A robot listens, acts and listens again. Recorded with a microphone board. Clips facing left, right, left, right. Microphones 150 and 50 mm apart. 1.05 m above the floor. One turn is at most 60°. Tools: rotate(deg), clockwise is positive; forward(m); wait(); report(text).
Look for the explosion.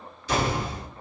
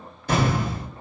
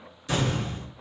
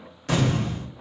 rotate(50)
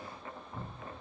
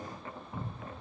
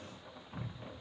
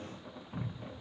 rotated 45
wait()
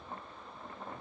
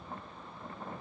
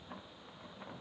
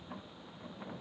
report("I heard an explosion, but can't make it out now. It was about 5° right or 85° right.")